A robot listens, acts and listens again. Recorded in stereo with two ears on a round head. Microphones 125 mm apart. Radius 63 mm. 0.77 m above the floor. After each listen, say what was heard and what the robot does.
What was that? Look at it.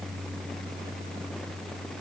Keep listening.
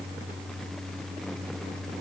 Keep listening.
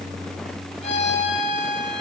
The violin: about 50° left or 130° left. Turn 50° left.
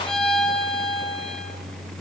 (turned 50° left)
Found it: a violin, straight ahead.